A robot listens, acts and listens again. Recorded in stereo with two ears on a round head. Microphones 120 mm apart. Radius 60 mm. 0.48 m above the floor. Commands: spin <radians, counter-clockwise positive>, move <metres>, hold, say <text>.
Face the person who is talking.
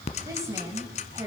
spin -0.44
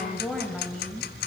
say Found it: a woman speaking, straight ahead, 2 to 4 m away.